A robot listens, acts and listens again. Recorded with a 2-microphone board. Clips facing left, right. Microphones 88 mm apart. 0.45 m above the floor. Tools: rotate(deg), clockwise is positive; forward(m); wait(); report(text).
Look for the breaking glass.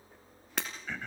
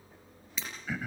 rotate(-65)
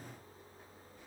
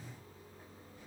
wait()
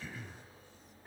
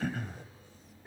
report("I heard breaking glass, but can't make it out now. It was about straight ahead or 50° left.")